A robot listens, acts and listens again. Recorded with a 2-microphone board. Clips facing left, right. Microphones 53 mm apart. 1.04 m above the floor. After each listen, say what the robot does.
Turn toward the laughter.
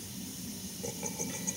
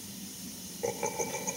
Turn 40° right.
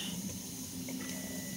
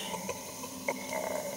Turn 100° right.
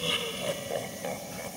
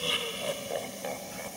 Facing the laughter.